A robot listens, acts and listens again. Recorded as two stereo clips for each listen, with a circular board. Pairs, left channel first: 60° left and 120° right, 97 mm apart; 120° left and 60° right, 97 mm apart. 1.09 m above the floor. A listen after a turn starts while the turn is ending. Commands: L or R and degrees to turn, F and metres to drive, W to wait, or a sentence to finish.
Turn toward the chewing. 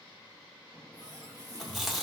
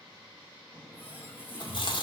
L150
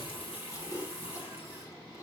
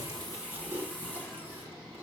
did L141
L10
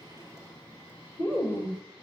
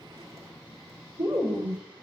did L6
Facing the chewing.